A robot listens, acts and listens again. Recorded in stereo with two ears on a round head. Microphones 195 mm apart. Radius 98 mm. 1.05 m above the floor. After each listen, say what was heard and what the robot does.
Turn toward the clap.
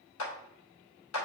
Turn 90° left.
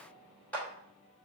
Facing the clap, 2 to 4 m away.